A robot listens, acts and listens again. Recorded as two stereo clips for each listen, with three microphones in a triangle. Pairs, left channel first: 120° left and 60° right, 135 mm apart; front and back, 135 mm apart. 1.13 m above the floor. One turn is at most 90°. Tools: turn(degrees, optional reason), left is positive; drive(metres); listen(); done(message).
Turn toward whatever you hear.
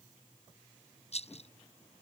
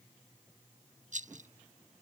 turn(degrees=90, reason="The rattle: 160° left.")
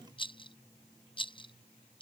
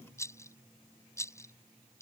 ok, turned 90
turn(degrees=70, reason="The rattle is now 70° left.")
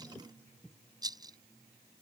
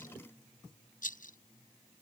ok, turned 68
done("Found it: a rattle, straight ahead.")